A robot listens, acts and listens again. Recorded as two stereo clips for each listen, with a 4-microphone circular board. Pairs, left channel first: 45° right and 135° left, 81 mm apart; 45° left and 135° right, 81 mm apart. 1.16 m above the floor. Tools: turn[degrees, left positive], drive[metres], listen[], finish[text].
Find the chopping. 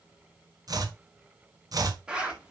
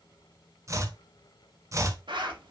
Thought: The chopping: 175° left.
Action: turn[175]
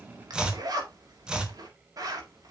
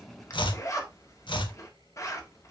Thought: The chopping is now 55° left.
Action: turn[55]
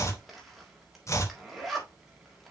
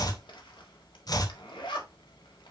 Action: finish[Found it: chopping, straight ahead, 1 to 2 m away.]